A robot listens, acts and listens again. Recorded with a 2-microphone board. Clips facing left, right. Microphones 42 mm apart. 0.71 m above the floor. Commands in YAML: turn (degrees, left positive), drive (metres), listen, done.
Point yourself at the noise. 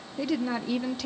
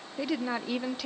turn: -30
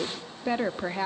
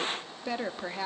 turn: 20
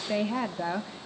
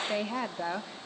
done: "Found it: a woman speaking, straight ahead."